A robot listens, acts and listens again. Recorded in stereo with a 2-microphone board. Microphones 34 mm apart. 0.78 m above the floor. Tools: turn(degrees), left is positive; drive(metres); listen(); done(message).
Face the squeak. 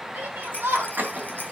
turn(degrees=-55)
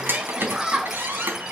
turn(degrees=-70)
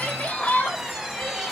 done("Facing the squeak.")